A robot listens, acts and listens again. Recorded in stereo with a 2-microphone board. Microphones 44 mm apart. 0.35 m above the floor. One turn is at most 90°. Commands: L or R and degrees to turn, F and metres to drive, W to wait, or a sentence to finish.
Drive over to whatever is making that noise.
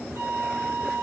R90
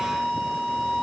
F1.0
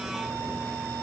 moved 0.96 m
W
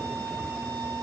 W
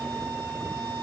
Facing where the violin came from. I can't hear it now. I did not reach it.